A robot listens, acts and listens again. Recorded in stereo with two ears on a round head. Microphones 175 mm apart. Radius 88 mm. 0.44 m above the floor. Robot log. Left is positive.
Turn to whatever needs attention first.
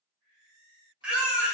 cmd yaw -30
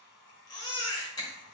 note: So it is at 25° left.
cmd yaw +25
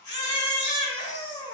note: The baby crying is now 25° left.
cmd yaw +25
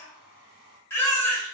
note: The baby crying is now 15° left.
cmd yaw +15
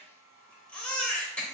end: Found it: a baby crying, straight ahead.